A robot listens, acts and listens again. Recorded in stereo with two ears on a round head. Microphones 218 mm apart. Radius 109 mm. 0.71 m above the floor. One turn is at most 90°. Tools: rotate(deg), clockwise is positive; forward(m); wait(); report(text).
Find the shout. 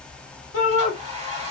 rotate(-65)
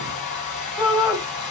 report("Found it: a shout, straight ahead, 1 to 2 m away.")